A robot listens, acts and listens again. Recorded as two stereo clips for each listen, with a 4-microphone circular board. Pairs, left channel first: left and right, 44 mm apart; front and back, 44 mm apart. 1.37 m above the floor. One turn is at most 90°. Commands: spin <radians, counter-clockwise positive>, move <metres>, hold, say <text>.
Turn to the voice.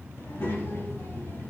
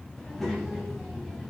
spin 1.57
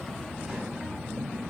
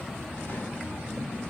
say Found it: a child speaking, straight ahead.